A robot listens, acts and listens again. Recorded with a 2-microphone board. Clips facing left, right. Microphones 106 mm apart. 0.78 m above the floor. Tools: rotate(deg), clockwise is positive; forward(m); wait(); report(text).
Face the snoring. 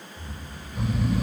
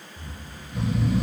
rotate(70)
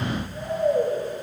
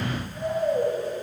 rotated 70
report("Facing the snoring.")